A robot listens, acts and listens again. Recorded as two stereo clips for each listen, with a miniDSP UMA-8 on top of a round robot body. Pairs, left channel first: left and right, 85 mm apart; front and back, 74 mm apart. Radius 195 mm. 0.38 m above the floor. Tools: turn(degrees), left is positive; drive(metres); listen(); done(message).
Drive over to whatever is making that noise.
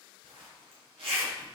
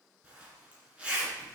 turn(degrees=-105)
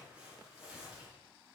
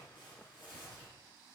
turn(degrees=-15)
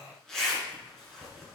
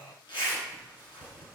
drive(metres=1.0)
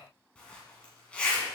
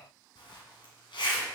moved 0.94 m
turn(degrees=10)
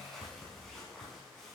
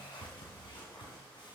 drive(metres=1.0)
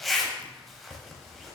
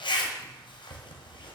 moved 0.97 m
drive(metres=1.0)
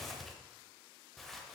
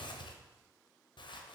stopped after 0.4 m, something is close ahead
done("I am next to the zipper.")